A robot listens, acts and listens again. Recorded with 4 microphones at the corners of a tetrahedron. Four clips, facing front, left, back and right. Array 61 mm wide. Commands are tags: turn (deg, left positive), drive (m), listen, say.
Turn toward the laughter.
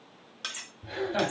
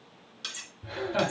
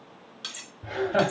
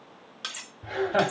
<turn deg="-130"/>
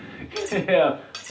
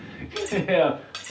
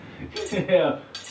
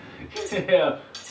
<turn deg="10"/>
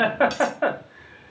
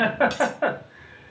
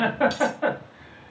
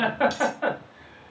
<turn deg="35"/>
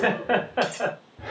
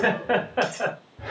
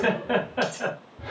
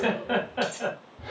<turn deg="45"/>
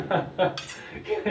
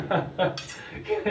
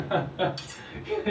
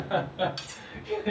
<turn deg="40"/>
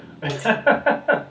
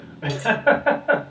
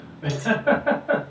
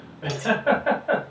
<say>Facing the laughter, 1 to 2 m away.</say>